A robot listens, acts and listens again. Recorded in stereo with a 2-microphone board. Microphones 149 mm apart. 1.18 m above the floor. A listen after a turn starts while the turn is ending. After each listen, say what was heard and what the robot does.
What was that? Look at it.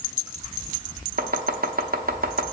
Turn 90° right.
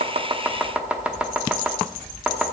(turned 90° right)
So it is at 10° right. Turn 10° right.
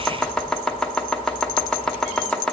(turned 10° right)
Found it: chopping, straight ahead.